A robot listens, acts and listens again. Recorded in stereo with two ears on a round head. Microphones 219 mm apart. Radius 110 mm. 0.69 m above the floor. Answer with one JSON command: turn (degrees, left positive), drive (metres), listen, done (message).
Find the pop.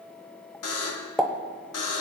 {"turn": 30}
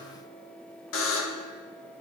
{"listen": true}
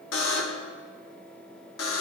{"done": "I heard a pop, but can't make it out now. It was about 30° right or 150° left."}